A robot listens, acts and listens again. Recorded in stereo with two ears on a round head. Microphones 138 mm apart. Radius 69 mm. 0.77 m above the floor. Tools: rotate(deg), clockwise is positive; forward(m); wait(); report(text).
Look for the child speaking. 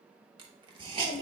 rotate(-65)
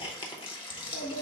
rotate(-45)
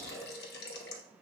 wait()
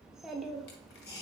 report("Found it: a child speaking, straight ahead, under 1 m away.")